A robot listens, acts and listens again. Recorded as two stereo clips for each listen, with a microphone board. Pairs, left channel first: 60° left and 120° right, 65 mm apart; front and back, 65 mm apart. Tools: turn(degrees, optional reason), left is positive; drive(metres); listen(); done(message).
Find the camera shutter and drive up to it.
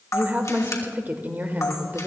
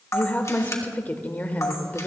turn(degrees=35, reason="The camera shutter: 35° left.")
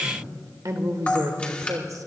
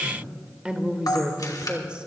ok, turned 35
turn(degrees=-10, reason="The camera shutter is now 10° right.")
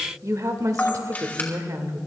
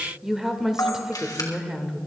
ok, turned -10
drive(metres=1.0)
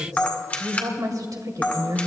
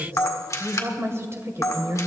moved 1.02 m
drive(metres=1.0)
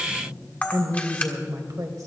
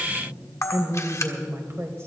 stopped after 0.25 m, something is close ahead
done("Arrived at the camera shutter, straight ahead.")